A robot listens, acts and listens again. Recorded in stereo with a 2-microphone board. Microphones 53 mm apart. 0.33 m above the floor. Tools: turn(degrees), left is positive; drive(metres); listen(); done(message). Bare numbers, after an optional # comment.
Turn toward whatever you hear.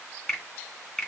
turn(30)
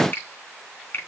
# So it is at 140° left.
turn(140)
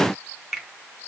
done("Found it: a finger snap, straight ahead.")